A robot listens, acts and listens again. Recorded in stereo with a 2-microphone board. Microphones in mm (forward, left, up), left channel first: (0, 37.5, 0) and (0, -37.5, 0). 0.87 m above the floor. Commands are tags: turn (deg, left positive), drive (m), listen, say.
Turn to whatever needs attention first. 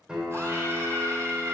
<turn deg="-40"/>
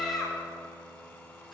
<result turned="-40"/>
<say>Found it: a scream, straight ahead.</say>